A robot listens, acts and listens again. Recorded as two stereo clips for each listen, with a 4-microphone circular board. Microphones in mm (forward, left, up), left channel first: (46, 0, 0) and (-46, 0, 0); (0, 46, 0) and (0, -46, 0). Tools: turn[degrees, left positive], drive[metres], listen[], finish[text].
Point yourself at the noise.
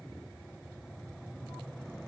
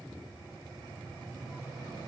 Action: listen[]
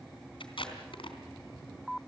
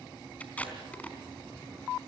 Thought: The tape being pulled: 15° left.
Action: turn[15]
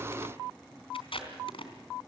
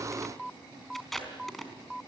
Action: finish[Facing the tape being pulled, 2 to 4 m away.]